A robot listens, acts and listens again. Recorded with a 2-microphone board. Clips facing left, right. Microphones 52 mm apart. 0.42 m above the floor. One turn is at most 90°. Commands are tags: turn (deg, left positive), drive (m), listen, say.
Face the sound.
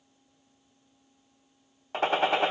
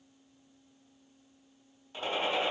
<turn deg="70"/>
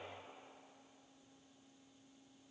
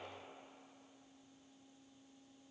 <listen/>
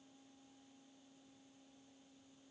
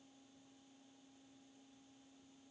<say>I heard a gunshot, but can't make it out now. It was about straight ahead or 40° left.</say>